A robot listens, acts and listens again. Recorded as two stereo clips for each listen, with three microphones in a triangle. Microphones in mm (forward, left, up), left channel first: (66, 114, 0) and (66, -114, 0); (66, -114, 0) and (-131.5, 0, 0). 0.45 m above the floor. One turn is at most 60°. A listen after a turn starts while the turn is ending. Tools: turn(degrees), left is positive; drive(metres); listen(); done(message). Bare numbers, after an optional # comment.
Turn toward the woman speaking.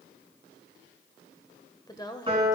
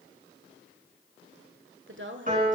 # The woman speaking: 160° left.
turn(60)
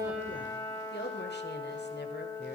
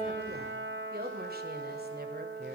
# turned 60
# The woman speaking is now 115° left.
turn(60)
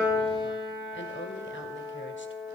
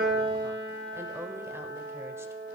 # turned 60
# Nothing new. It was at 55° left.
turn(55)
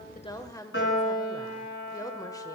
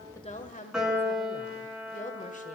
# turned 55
# The woman speaking is now 20° left.
turn(20)
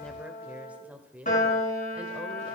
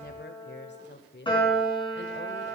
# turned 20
done("Found it: a woman speaking, straight ahead.")